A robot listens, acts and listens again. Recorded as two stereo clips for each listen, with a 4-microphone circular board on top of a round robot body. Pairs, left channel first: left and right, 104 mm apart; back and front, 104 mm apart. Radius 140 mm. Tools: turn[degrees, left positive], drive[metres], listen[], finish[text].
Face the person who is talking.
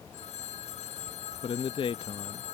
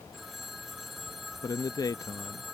Thought: The man speaking: 125° left.
Action: turn[125]
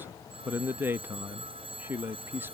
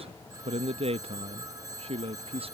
Thought: The man speaking is now 20° right.
Action: turn[-20]
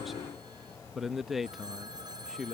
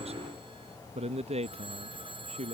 Action: finish[Facing the man speaking.]